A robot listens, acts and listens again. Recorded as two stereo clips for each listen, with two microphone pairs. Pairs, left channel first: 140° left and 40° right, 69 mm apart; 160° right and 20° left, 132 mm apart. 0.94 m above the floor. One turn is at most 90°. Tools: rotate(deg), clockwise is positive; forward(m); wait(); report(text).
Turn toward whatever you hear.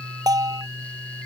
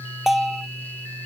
rotate(65)
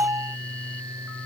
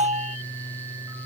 report("Found it: a bell, straight ahead.")